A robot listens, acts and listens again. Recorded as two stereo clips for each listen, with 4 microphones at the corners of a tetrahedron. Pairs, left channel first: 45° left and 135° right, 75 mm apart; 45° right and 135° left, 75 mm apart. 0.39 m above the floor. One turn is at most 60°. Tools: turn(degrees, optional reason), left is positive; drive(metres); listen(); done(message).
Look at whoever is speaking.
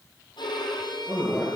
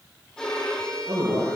turn(degrees=60, reason="The man speaking: 115° left.")
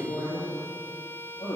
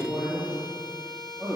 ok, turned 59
turn(degrees=55, reason="The man speaking is now 55° left.")
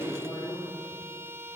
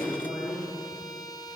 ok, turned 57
done("Found it: a man speaking, straight ahead.")